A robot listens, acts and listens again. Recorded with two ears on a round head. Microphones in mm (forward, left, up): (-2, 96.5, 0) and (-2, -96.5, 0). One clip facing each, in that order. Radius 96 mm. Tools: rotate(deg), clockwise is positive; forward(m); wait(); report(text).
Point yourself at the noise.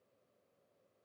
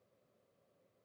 wait()
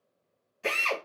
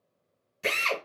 rotate(45)
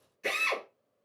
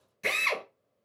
rotate(85)
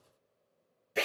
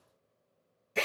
report("Facing the drill, 1 to 2 m away.")